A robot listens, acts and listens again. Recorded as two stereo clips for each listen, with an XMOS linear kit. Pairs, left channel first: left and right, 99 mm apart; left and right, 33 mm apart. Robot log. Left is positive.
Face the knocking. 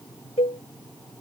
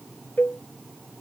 cmd idle
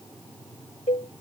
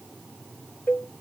cmd idle
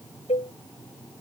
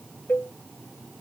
end: I can't make out knocking, only a cowbell.